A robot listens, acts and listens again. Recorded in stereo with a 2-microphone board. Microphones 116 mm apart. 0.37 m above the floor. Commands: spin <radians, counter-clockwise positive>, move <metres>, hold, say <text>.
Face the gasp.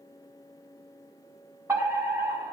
hold
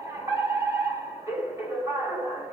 hold
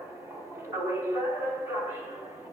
say I can't make out a gasp, only a fire alarm.